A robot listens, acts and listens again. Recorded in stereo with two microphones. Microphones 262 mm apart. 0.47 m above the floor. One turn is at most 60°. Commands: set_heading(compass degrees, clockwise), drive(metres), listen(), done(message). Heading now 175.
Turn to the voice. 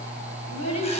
set_heading(115)
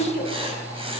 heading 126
set_heading(86)
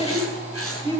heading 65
set_heading(85)
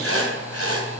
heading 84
listen()
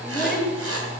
done("Found it: a child speaking, straight ahead.")